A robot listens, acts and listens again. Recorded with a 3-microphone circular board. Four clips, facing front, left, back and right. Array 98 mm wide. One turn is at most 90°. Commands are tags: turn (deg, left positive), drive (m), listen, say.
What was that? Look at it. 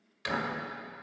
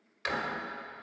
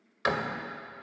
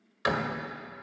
<turn deg="-90"/>
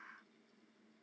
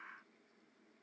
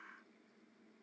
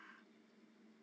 <turn deg="-55"/>
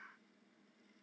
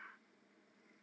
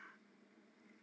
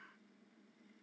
<say>Facing where the door slam came from. I can't hear it now.</say>